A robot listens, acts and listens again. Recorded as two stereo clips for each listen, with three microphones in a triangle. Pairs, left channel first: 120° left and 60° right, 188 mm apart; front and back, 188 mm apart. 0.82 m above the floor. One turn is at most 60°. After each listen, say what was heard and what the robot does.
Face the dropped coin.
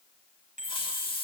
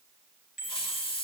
Keep listening.
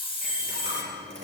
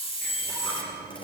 The dropped coin: 60° right. Turn 60° right.
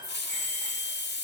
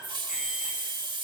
Facing where the dropped coin came from. I can't hear it now.